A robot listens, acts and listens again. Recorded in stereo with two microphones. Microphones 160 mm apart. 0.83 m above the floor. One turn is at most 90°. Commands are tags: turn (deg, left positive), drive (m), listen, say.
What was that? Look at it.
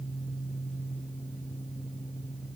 <listen/>
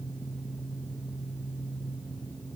<listen/>
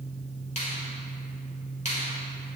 <turn deg="45"/>
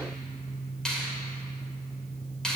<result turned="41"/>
<say>Found it: a finger snap, straight ahead.</say>